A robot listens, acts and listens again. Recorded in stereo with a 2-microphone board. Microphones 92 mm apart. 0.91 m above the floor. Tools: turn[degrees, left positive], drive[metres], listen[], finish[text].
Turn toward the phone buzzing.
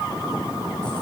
Action: listen[]
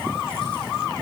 Action: listen[]
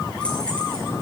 Action: finish[I can't make out a phone buzzing to turn to.]